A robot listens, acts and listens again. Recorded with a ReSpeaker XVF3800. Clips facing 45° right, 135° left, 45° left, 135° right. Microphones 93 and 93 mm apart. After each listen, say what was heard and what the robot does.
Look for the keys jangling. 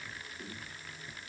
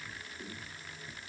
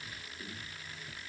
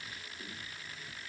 Keep listening.
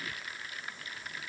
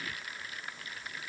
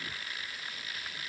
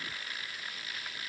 Keep listening.
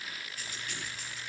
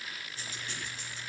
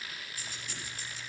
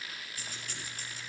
The keys jangling: 170° right. Turn 170° right.
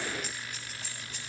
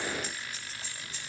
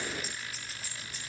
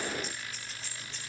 The keys jangling is now 35° right. Turn 35° right.
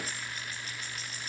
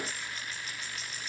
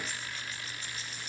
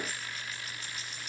Facing the keys jangling.